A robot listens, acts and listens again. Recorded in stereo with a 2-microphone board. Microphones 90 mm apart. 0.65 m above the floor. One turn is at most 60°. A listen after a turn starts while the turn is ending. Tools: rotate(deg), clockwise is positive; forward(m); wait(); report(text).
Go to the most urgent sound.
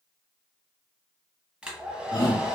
rotate(-50)
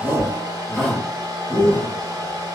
rotate(-15)
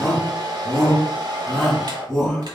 forward(1.0)
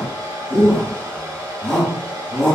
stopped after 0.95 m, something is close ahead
rotate(-10)
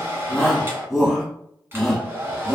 report("I am next to the shout.")